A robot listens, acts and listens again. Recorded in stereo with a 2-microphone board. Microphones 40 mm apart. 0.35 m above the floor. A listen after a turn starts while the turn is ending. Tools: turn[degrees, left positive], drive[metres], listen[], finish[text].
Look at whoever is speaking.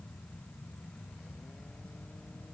Action: listen[]
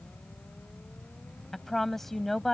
Action: turn[30]
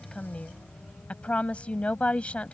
Thought: So it is at 140° left.
Action: turn[140]
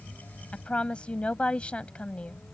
Thought: The woman speaking is now 35° left.
Action: turn[35]
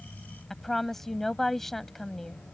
Thought: The woman speaking is now 10° left.
Action: turn[10]
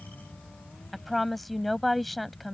Action: finish[Found it: a woman speaking, straight ahead.]